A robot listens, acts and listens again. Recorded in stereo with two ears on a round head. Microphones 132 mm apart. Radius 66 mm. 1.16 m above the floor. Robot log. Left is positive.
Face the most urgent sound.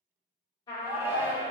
cmd yaw -30
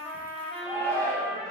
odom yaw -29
note: So it is at 15° left.
cmd yaw +15
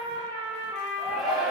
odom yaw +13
end: Facing the shout.